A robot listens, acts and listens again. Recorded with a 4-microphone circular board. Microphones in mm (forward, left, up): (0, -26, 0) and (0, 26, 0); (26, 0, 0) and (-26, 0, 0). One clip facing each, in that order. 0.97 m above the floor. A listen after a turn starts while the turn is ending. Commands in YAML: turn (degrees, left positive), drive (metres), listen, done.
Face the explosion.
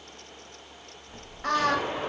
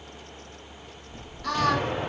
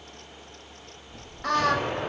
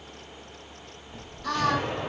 turn: 50
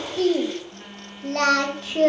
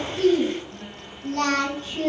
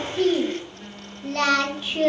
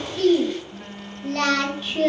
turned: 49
done: "I heard an explosion from this way, but can't make it out now."